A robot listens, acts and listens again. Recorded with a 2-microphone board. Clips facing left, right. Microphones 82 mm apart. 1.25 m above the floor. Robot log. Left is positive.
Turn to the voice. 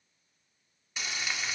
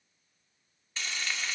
cmd idle
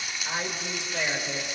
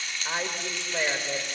note: The woman speaking: about 20° right or 160° right.
cmd yaw -20
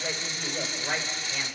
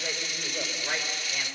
end: Found it: a woman speaking, straight ahead.